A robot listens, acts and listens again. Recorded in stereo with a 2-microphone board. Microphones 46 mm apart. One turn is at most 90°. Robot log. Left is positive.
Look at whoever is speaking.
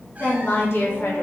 note: The woman speaking: about 65° left or 115° left.
cmd yaw +65
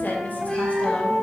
cmd idle
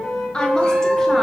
note: So it is at 20° left.
cmd yaw +20
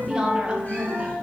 note: The woman speaking is now 30° right.
cmd yaw -30
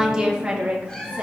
note: The woman speaking is now 30° right.
cmd yaw -30
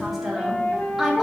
end: Found it: a woman speaking, straight ahead, 1 to 2 m away.